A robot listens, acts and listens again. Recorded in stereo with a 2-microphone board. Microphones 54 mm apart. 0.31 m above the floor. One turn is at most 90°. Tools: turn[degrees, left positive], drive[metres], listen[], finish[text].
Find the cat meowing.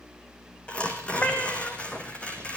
Thought: The cat meowing: about 40° left or 140° left.
Action: turn[40]
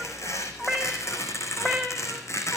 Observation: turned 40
Thought: So it is at 10° left.
Action: turn[10]
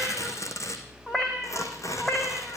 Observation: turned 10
Thought: The cat meowing is now 15° left.
Action: turn[15]
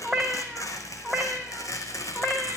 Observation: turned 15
Action: finish[Found it: a cat meowing, straight ahead.]